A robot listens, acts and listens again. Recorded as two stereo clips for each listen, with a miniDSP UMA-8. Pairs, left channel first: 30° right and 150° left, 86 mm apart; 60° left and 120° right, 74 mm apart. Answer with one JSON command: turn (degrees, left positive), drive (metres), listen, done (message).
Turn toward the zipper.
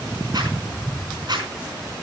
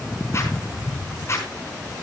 {"turn": 115}
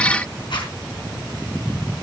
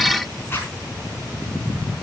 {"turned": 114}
{"done": "Found it: a zipper, straight ahead, over 4 m away."}